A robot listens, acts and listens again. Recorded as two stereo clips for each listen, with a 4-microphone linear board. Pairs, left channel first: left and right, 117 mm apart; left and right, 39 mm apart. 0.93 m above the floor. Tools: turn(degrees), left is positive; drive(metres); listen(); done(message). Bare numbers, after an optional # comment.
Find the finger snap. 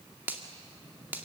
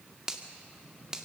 # The finger snap: about 15° right or 165° right.
turn(-15)
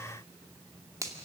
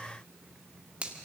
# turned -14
# So it is at 150° right.
turn(-150)
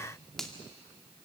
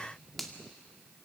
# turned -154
done("Found it: a finger snap, straight ahead.")